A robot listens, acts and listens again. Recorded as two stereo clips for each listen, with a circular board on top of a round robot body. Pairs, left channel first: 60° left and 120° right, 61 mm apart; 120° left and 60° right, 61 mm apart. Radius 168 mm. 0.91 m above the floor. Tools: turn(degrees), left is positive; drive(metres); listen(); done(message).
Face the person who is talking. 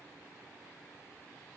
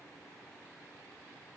listen()
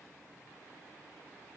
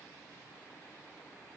listen()
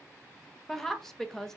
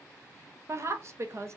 turn(degrees=-20)
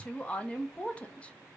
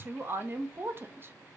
turn(degrees=-10)
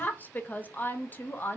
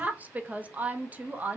done("Facing the woman speaking.")